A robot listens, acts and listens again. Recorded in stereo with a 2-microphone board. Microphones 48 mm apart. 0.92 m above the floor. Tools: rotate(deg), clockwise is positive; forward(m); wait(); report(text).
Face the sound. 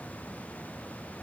wait()
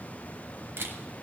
rotate(55)
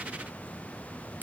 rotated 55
wait()
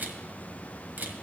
rotate(50)
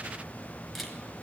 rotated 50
report("Found it: a camera shutter, straight ahead.")